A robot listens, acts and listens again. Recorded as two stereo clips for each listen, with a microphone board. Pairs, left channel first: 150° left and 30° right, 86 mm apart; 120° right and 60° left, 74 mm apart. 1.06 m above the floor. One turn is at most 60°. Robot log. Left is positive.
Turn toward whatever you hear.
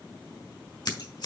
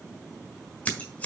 note: The scissors: 175° left.
cmd yaw +60
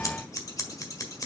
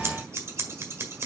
note: The scissors is now 110° left.
cmd yaw +60
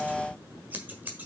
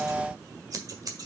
note: The scissors is now 40° left.
cmd yaw +40
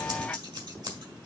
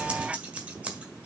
note: The scissors is now 10° right.
cmd yaw -10
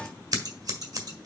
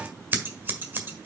end: Facing the scissors.